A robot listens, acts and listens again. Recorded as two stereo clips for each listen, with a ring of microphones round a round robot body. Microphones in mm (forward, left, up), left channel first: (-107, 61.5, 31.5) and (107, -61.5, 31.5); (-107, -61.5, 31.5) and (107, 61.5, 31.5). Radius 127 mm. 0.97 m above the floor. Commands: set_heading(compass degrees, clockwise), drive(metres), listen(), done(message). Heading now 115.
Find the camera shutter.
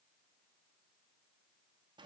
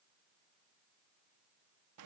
listen()
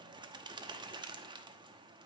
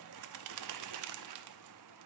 listen()
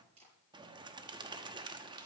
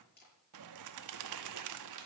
set_heading(210)
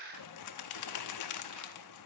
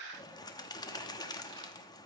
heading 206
listen()
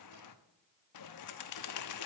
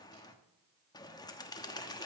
listen()
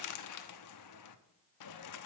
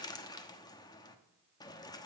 done("I heard a camera shutter from this way, but can't make it out now.")